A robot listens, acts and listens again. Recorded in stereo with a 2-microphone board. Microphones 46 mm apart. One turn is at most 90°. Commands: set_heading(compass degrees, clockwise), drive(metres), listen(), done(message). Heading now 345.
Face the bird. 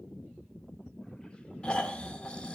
listen()
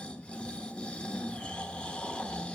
listen()
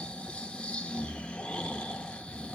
done("I can't make out a bird to turn to.")